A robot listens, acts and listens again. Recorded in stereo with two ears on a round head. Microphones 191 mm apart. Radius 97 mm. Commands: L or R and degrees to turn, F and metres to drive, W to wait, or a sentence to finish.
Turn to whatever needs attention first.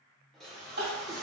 R45
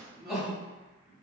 Facing the crying, 1 to 2 m away.